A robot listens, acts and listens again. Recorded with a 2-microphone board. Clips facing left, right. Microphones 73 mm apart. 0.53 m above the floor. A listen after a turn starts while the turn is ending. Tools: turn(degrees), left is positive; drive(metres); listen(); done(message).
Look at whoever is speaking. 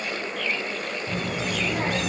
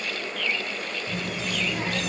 turn(degrees=45)
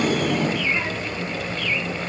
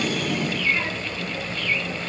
turn(degrees=15)
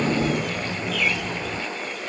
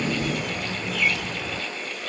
done("Found it: a child speaking, straight ahead.")